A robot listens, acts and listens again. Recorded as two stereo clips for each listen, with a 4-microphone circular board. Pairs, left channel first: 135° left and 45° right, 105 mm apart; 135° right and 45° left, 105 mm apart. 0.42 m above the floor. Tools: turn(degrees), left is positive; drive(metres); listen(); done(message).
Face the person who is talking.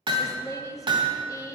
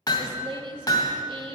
turn(degrees=80)
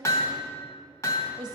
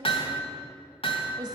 done("Found it: a woman speaking, straight ahead, 1 to 2 m away.")